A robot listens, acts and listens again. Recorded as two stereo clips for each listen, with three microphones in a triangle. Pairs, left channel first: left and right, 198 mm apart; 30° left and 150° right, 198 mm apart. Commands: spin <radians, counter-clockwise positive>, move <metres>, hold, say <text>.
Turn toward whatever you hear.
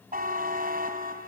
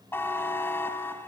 spin -0.87
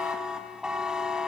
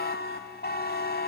say Found it: a buzzer, straight ahead, 2 to 4 m away.